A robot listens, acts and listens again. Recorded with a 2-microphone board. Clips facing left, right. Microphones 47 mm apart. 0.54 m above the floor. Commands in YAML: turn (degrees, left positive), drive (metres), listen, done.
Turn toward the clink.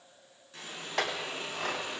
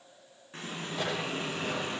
turn: 90
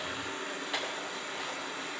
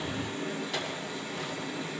turn: 15
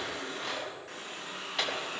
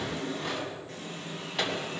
done: "Found it: a clink, straight ahead, 2 to 4 m away."